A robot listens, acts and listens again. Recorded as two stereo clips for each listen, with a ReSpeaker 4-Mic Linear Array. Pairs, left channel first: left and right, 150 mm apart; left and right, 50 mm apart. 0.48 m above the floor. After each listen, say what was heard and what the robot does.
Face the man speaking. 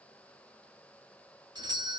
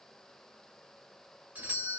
Keep listening.
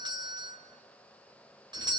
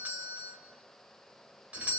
Keep listening.
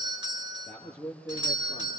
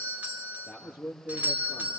Turn 30° left.
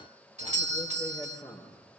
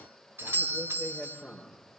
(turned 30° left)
So it is at 20° right. Turn 20° right.
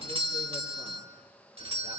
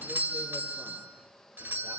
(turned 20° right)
Keep listening.
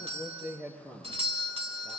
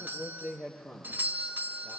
Facing the man speaking, over 4 m away.